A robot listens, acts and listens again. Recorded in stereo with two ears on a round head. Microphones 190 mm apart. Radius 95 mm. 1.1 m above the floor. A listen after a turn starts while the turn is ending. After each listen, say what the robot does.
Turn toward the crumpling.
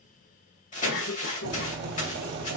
Turn 35° left.
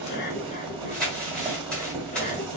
Found it: crumpling, straight ahead.